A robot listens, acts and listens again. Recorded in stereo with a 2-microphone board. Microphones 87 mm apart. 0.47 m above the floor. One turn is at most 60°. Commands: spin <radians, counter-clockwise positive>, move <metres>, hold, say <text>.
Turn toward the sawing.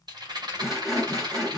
spin -0.52
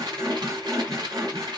spin -1.05
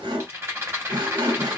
spin -1.05
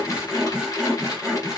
spin -0.17
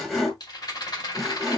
say Facing the sawing, 1 to 2 m away.